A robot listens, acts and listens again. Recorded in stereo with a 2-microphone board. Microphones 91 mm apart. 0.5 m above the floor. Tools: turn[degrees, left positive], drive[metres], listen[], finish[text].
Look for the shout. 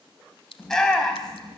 Action: turn[30]
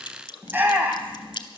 Thought: So it is at 25° right.
Action: turn[-25]
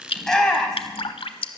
Action: finish[Found it: a shout, straight ahead.]